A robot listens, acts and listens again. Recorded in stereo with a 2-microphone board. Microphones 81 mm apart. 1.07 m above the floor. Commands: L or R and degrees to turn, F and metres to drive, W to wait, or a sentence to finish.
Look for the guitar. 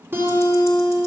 R30
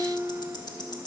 R120
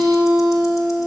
R45
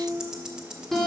Facing the guitar.